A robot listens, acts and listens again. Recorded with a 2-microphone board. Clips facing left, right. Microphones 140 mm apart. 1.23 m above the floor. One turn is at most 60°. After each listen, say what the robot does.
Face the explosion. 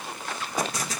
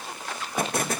Turn 60° right.
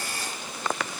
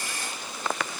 Keep listening.
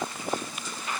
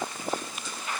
I heard an explosion, but can't make it out now. It was about straight ahead or 60° right.